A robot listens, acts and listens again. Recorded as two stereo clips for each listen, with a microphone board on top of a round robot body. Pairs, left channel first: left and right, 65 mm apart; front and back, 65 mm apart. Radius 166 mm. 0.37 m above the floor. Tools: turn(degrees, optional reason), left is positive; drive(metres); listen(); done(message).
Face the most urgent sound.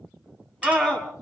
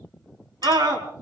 turn(degrees=175, reason="The scream: 175° left.")
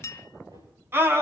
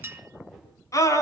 turn(degrees=-35, reason="The scream is now 35° right.")
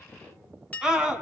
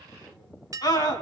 turn(degrees=-10, reason="The scream is now 10° right.")
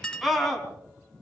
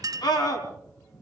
done("Facing the scream, over 4 m away.")